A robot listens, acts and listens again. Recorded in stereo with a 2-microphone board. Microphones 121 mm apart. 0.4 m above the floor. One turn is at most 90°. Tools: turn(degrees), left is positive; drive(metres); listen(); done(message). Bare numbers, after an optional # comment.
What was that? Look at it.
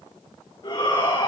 # The shout: about 45° left or 135° left.
turn(45)
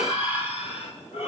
# So it is at 85° left.
turn(85)
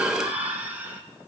# The shout is now 15° right.
turn(-15)
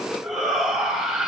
done("Found it: a shout, straight ahead, 2 to 4 m away.")